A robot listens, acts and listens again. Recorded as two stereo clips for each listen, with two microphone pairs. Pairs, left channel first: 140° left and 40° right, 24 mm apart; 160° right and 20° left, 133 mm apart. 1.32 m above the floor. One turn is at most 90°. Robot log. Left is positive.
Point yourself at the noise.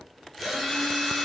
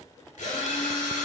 note: The drill: 140° right.
cmd yaw -90
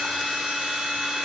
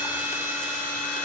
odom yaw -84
note: The drill is now 55° right.
cmd yaw -55
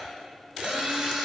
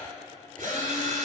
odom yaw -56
end: Facing the drill, 2 to 4 m away.